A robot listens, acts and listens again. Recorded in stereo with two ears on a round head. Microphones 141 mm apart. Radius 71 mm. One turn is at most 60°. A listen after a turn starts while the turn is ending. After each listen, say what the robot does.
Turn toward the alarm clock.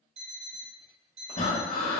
Turn 40° right.
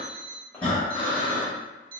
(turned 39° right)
Turn 60° right.
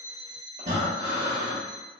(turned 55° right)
Turn 35° right.
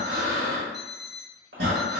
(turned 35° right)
Facing the alarm clock, 1 to 2 m away.